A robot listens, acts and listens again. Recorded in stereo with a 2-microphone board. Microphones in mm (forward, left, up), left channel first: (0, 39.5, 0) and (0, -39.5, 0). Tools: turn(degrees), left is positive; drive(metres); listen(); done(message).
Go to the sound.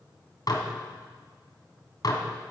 turn(degrees=55)
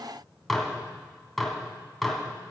drive(metres=1.0)
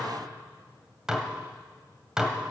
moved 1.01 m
drive(metres=1.0)
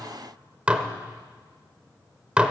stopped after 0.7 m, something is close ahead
turn(degrees=-15)
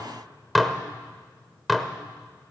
done("I am next to the dishes clattering.")